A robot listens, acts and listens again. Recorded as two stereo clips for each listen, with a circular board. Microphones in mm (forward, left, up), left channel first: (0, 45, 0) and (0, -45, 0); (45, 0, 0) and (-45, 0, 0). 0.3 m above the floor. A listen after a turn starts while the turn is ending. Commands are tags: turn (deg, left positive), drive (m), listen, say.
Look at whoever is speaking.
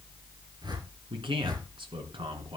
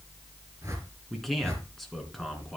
<turn deg="-90"/>
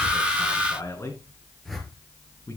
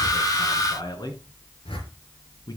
<turn deg="35"/>
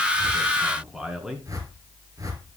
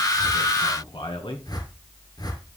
<say>Found it: a man speaking, straight ahead.</say>